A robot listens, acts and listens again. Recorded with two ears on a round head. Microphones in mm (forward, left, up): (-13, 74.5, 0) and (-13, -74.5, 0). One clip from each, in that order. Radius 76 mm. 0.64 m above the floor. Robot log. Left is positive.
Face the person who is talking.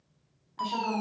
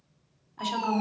note: The woman speaking: about 55° right or 125° right.
cmd yaw -55
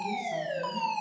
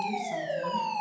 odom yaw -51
cmd idle
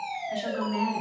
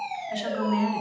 note: So it is at 15° right.
cmd yaw -15
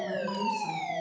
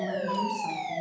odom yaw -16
cmd idle
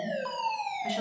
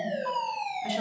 cmd idle
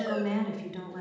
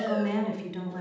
end: Facing the woman speaking, 2 to 4 m away.